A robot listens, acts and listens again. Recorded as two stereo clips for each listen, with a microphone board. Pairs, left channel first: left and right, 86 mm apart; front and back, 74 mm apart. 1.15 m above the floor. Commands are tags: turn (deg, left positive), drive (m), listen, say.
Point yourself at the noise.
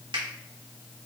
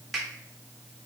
<turn deg="-90"/>
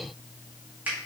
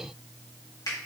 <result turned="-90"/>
<turn deg="-20"/>
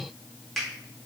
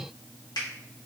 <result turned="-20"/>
<say>Found it: a finger snap, straight ahead, 1 to 2 m away.</say>